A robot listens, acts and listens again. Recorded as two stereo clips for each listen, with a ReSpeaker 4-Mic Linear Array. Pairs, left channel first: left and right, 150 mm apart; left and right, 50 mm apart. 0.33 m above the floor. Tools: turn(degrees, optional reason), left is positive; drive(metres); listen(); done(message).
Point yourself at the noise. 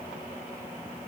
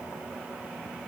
listen()
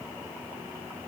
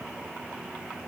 listen()
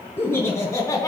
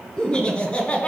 turn(degrees=25, reason="The laughter: about 25° left or 155° left.")
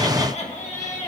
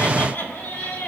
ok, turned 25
turn(degrees=125, reason="So it is at 125° left.")
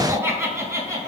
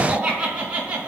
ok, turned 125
turn(degrees=-25, reason="The laughter is now 25° right.")
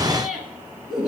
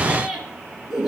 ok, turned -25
done("Found it: laughter, straight ahead.")